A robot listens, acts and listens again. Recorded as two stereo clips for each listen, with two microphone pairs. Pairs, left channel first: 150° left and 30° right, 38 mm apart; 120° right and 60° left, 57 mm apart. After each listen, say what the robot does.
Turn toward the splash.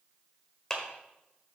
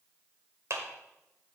Keep listening.
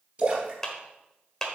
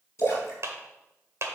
Turn 85° right.
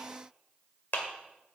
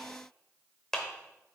Facing where the splash came from. I can't hear it now.